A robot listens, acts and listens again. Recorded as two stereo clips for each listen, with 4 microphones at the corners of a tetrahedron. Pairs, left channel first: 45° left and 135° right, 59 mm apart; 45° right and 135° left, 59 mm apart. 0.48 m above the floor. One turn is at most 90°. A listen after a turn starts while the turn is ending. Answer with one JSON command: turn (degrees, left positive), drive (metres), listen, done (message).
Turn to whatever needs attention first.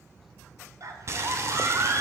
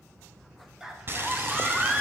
{"turn": -90}
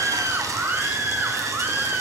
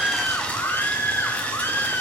{"turn": -80}
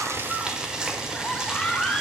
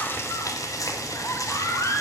{"turn": -30}
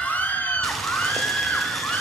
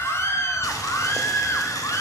{"turn": -15}
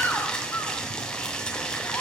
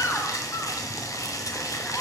{"listen": true}
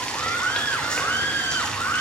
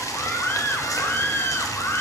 {"done": "Facing the scream, 1 to 2 m away."}